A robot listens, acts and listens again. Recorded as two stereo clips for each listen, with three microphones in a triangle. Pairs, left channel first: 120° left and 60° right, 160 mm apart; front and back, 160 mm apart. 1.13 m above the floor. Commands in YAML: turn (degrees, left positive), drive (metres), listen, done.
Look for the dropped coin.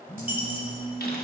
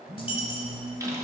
turn: -50
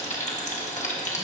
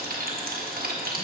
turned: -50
done: "I heard a dropped coin from this way, but can't make it out now."